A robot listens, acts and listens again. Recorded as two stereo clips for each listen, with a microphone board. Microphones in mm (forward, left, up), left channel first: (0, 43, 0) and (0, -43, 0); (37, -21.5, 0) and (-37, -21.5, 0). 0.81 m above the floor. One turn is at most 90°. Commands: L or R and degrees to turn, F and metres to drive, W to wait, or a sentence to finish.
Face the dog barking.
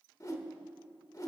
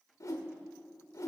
W
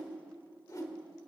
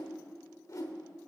W
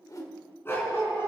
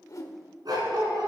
L90
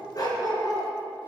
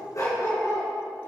L45
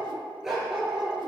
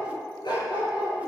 Facing the dog barking.